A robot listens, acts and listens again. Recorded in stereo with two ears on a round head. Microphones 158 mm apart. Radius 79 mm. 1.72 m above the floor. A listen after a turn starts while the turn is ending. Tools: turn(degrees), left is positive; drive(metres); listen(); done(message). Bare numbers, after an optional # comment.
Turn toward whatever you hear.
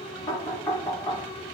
# The knocking: about 15° left or 165° left.
turn(15)
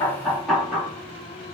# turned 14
done("Found it: knocking, straight ahead.")